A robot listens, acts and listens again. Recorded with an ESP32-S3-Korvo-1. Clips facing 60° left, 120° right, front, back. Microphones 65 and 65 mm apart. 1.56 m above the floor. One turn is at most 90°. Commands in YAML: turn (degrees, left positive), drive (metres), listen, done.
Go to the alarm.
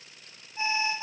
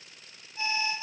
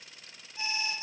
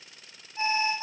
turn: 90
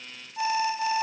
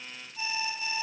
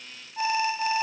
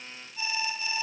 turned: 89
turn: 35
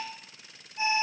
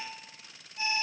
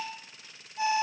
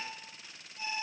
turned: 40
drive: 1.0
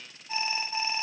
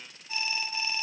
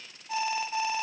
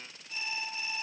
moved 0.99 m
drive: 1.0
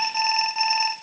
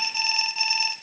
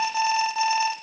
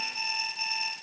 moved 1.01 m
drive: 1.0
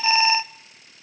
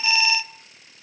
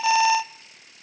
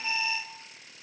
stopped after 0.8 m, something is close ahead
done: "I am next to the alarm."